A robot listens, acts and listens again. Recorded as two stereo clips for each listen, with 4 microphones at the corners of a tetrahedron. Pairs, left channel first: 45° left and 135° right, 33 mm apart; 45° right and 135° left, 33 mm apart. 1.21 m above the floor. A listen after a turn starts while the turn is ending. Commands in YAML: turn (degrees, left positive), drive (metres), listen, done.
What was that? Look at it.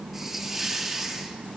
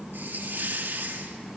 turn: 140
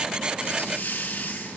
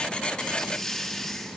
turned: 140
turn: 30
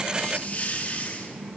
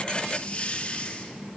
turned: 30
done: "Facing the hiss."